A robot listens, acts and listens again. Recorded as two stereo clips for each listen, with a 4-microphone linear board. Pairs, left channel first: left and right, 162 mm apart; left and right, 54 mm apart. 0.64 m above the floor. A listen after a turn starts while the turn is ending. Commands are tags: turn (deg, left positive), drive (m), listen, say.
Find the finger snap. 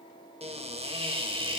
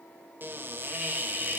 <listen/>
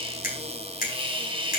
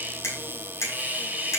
<turn deg="60"/>
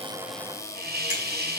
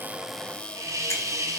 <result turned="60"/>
<listen/>
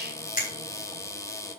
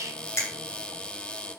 <turn deg="60"/>
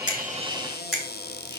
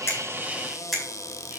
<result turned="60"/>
<say>Found it: a finger snap, straight ahead.</say>